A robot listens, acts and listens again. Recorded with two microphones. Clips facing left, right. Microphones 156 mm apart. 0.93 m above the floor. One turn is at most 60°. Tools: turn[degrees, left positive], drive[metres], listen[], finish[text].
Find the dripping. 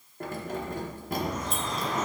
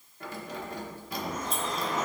Action: turn[30]
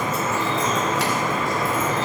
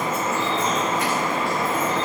Thought: So it is at 30° right.
Action: turn[-30]
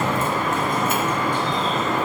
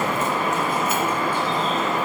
Thought: The dripping is now 10° right.
Action: turn[-10]
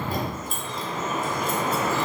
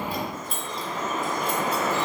Action: finish[Found it: dripping, straight ahead, 2 to 4 m away.]